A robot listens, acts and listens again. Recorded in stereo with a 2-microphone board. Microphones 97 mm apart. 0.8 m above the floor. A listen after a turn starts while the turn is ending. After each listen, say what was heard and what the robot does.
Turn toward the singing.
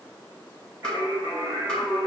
The singing: about 30° right or 150° right. Turn 30° right.
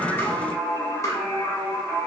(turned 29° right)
Facing the singing.